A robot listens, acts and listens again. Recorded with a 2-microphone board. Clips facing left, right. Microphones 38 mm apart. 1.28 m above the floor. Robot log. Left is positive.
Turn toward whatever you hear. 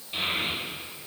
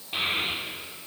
note: The child speaking: about 30° right or 150° right.
cmd yaw -30
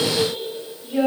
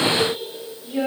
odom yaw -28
note: So it is at 20° left.
cmd yaw +20
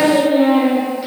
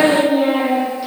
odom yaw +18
note: The child speaking is now 15° left.
cmd yaw +15
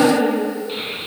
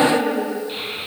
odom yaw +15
end: Facing the child speaking.